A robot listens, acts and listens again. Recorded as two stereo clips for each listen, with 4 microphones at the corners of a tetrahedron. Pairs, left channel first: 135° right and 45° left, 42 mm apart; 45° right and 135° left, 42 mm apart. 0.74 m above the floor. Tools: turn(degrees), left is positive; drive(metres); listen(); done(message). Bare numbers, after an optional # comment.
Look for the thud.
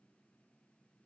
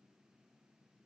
listen()
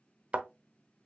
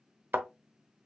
# The thud: 100° left.
turn(100)
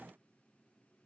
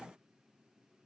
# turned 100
done("Facing where the thud came from. I can't hear it now.")